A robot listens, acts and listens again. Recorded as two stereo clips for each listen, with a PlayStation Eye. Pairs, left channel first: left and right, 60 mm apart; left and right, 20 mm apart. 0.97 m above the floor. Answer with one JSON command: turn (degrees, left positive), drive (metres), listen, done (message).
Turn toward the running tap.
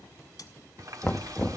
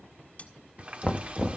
{"turn": -90}
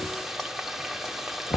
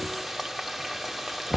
{"done": "Facing the running tap."}